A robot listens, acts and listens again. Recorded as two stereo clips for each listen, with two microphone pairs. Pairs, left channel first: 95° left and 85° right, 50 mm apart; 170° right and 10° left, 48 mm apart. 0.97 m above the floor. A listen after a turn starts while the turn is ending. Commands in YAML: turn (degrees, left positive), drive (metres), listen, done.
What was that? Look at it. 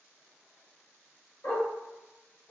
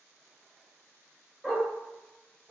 turn: 100
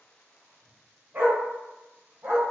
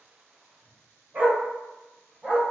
turn: -55
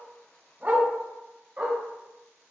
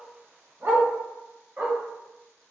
turn: -35
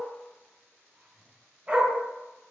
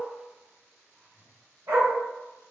turn: -15
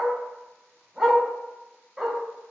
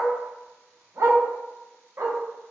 done: "Found it: a dog barking, straight ahead."